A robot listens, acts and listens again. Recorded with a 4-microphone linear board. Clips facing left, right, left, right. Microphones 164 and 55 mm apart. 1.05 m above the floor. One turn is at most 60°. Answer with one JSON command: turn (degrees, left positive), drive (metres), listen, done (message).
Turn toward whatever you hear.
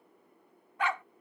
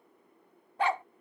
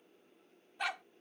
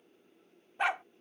{"turn": -30}
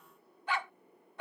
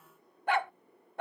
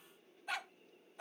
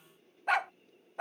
{"turn": -60}
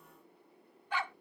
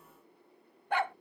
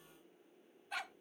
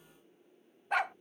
{"turn": -60}
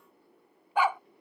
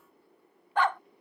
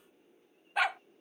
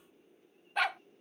{"turn": 10}
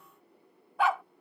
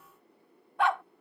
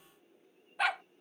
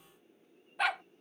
{"done": "Found it: a dog barking, straight ahead."}